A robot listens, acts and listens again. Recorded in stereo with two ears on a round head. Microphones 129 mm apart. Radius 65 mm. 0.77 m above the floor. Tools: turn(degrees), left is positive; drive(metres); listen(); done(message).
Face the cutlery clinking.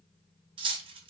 turn(degrees=-35)
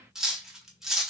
done("Found it: cutlery clinking, straight ahead.")